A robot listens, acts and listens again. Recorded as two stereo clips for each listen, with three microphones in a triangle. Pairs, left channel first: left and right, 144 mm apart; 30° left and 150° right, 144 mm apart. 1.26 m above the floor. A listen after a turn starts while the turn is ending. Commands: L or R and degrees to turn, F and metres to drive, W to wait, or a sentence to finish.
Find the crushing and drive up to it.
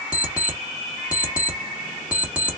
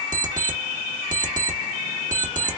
W
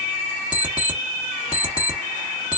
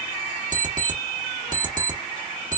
W
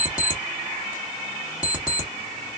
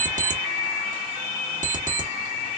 I can't make out crushing to turn to.